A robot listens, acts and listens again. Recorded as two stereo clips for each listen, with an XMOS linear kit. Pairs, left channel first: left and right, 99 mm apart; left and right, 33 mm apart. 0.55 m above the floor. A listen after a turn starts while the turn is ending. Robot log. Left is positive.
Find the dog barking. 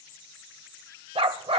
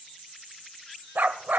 note: The dog barking: about 75° right or 105° right.
cmd yaw -75
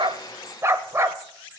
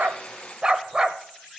note: So it is at 30° right.
cmd yaw -30
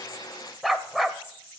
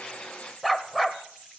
end: Found it: a dog barking, straight ahead, under 1 m away.